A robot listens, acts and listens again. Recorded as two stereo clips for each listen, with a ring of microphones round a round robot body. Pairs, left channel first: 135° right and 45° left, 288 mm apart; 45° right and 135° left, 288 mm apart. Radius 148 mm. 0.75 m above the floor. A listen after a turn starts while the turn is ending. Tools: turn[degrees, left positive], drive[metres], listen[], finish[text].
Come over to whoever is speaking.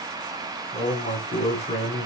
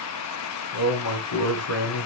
Thought: The man speaking: 65° right.
Action: turn[-65]
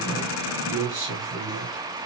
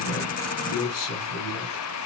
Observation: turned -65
Action: drive[1.0]
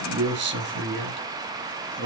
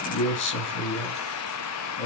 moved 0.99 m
Action: drive[1.0]
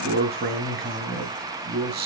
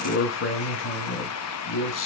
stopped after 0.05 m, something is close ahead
Action: finish[I am next to the man speaking.]